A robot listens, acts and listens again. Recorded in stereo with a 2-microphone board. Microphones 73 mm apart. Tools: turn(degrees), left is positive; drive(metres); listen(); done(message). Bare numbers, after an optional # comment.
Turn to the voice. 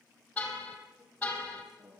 turn(-30)
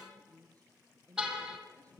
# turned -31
# So it is at 20° left.
turn(20)
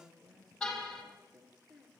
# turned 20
done("Found it: a woman speaking, straight ahead, over 4 m away.")